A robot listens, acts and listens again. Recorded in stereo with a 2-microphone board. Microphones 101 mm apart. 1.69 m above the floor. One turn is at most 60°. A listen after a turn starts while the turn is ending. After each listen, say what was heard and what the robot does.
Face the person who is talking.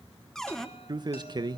The man speaking: about 40° right or 140° right. Turn 40° right.
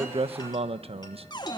So it is at 90° right. Turn 60° right.
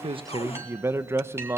The man speaking is now 25° right. Turn 25° right.
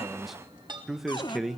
Found it: a man speaking, straight ahead.